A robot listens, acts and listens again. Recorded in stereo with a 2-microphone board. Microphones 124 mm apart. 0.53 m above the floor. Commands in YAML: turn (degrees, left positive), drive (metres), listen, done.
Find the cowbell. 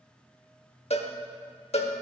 turn: 60
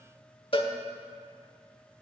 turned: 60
turn: 50
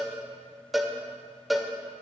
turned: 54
done: "Facing the cowbell."